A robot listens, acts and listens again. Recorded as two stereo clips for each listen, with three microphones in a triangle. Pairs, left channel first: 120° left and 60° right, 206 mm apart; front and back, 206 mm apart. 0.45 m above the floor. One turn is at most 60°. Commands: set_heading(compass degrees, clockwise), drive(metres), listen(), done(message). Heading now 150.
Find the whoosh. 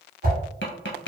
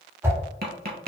set_heading(210)
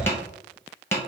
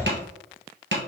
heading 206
set_heading(251)
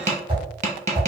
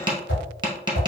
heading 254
done("Facing the whoosh.")